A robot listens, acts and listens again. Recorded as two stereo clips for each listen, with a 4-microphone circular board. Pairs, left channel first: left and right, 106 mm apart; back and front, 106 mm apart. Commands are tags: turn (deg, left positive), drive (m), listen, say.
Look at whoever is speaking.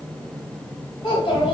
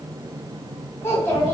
<turn deg="115"/>
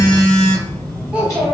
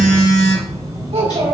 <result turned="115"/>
<turn deg="-15"/>
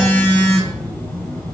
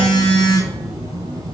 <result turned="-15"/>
<listen/>
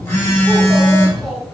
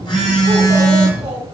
<listen/>
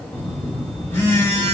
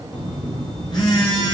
<say>I heard a child speaking from this way, but can't make it out now.</say>